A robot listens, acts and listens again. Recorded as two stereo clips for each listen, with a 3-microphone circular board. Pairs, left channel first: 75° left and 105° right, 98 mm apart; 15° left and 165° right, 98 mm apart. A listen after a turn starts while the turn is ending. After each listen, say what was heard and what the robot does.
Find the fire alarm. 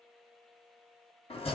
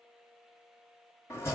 Keep listening.
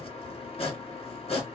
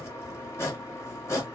Keep listening.
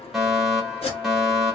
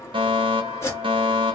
The fire alarm: 170° left. Turn 170° left.
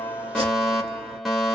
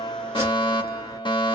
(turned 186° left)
The fire alarm is now 15° right. Turn 15° right.
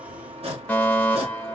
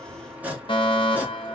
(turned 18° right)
Facing the fire alarm, 1 to 2 m away.